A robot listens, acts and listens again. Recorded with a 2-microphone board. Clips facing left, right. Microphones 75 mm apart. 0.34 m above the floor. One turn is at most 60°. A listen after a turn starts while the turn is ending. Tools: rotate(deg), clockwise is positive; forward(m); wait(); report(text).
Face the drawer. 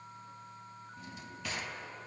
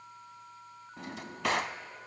rotate(60)
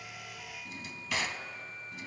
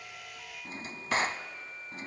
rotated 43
rotate(40)
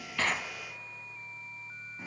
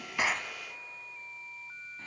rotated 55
rotate(-10)
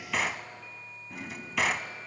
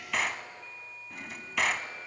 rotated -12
report("Found it: a drawer, straight ahead.")